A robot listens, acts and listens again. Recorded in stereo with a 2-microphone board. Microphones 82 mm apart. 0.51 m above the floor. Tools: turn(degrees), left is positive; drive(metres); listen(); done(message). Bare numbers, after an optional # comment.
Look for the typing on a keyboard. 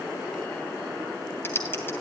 # The typing on a keyboard: about 30° left or 150° left.
turn(30)
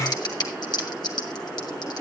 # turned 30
# So it is at 120° left.
turn(120)
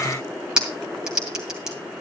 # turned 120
# The typing on a keyboard is now 10° right.
turn(-10)
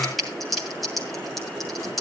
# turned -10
done("Facing the typing on a keyboard, 2 to 4 m away.")